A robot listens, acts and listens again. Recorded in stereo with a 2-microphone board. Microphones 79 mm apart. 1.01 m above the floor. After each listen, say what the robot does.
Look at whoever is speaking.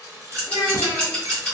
Turn 55° left.
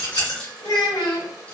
Turn 70° left.
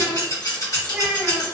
Facing the child speaking, 1 to 2 m away.